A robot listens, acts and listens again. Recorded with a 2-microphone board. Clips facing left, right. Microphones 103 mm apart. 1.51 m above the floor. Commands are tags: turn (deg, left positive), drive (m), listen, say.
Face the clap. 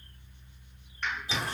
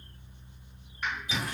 <turn deg="-30"/>
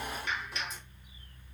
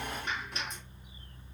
<turn deg="-145"/>
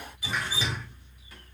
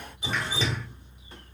<listen/>
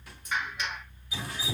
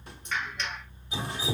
<turn deg="10"/>
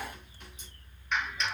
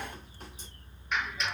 <say>Found it: a clap, straight ahead, 2 to 4 m away.</say>